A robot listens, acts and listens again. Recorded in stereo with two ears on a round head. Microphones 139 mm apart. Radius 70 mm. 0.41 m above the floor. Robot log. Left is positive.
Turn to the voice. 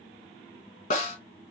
cmd idle
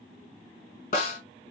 cmd idle
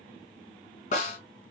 end: I can't make out anyone speaking, only a snare drum.